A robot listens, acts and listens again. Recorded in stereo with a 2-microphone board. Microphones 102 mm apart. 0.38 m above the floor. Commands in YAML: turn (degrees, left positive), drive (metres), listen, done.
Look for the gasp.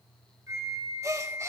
turn: -30
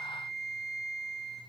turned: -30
listen: true
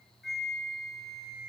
done: "I heard a gasp, but can't make it out now. It was about straight ahead or 120° right."